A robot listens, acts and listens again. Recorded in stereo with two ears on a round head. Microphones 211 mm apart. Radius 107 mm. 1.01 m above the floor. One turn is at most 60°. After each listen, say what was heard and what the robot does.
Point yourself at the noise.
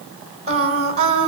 The singing: about 30° right or 150° right. Turn 30° right.
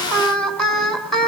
Found it: singing, straight ahead, 2 to 4 m away.